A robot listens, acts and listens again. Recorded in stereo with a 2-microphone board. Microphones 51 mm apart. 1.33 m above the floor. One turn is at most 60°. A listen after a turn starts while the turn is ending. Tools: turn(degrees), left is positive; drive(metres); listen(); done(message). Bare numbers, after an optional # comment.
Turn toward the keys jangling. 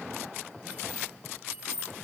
# The keys jangling: about 30° right or 150° right.
turn(-30)
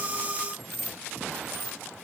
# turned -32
done("Facing the keys jangling.")